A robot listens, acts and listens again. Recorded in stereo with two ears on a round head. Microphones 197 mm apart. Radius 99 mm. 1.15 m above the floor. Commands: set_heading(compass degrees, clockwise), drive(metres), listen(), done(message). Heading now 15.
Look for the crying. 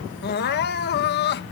set_heading(330)
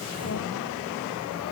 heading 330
listen()
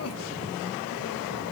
listen()
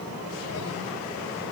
done("I heard crying, but can't make it out now. It was about straight ahead or 90° left.")